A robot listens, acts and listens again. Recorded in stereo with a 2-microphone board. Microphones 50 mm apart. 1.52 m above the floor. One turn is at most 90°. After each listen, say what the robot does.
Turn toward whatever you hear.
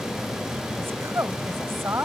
Turn 55° right.
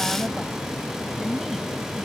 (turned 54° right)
Keep listening.
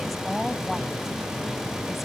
Keep listening.
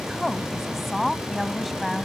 Facing the woman speaking.